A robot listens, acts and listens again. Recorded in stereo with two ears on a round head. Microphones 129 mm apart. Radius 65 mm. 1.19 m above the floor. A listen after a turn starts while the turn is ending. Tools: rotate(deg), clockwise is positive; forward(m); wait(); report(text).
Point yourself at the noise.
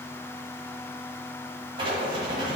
rotate(35)
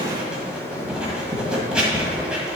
report("Facing the writing.")